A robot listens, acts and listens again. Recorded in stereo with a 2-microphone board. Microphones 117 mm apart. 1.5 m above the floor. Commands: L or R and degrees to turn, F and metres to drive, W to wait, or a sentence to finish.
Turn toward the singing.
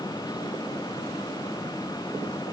W
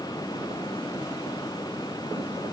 W
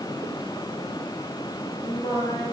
L70
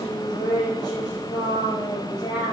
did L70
L35
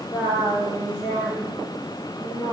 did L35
L10
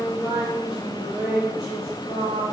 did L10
Facing the singing.